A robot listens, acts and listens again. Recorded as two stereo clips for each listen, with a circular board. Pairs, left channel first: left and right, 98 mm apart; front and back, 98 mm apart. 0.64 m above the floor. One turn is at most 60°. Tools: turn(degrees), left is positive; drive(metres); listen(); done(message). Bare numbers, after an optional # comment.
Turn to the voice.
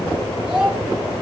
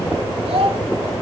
# The child speaking: 170° right.
turn(-60)
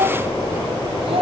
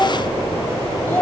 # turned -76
# The child speaking is now 75° right.
turn(-60)
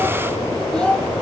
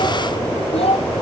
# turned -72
done("Found it: a child speaking, straight ahead, 2 to 4 m away.")